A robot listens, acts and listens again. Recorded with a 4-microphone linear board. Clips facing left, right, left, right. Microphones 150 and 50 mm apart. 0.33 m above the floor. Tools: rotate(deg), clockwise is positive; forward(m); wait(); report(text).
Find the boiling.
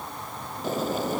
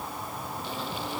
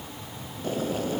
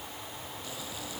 rotate(-45)
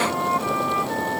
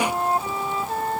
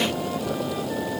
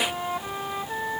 rotate(-90)
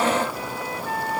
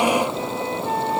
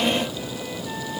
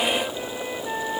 rotate(25)
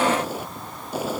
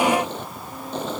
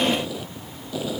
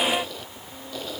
rotate(-10)
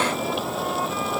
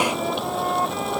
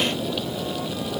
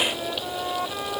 report("Found it: boiling, straight ahead.")